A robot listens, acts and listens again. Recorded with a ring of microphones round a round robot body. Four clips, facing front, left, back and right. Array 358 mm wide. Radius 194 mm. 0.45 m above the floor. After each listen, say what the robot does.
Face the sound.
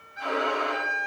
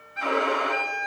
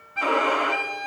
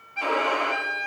Turn 170° right.
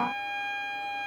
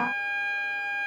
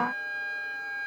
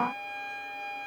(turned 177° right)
Turn 10° left.
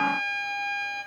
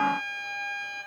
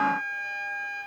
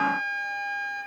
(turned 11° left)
Found it: a violin, straight ahead, 2 to 4 m away.